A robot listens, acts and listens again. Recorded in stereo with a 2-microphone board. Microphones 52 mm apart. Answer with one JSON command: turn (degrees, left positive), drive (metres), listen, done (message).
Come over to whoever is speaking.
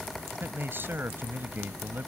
{"turn": -45}
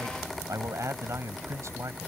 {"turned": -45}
{"turn": -85}
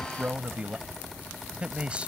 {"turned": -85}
{"turn": -25}
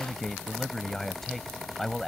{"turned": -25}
{"drive": 1.0}
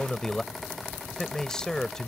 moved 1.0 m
{"turn": 15}
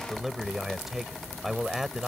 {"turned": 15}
{"drive": 1.0}
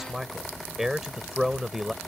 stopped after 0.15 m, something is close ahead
{"done": "Something is in my way. I am facing the man speaking but have not reached it."}